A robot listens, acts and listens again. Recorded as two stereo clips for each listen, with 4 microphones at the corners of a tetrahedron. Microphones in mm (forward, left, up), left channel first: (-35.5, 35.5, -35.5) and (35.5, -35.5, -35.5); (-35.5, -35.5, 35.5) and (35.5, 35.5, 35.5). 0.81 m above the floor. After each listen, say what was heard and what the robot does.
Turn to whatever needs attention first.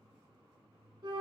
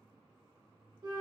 Keep listening.
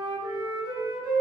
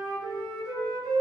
Keep listening.
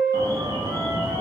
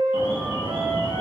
The alarm: 170° right. Turn 170° right.
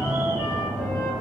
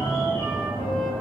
The alarm is now 20° left. Turn 20° left.
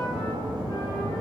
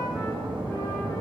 Found it: an alarm, straight ahead.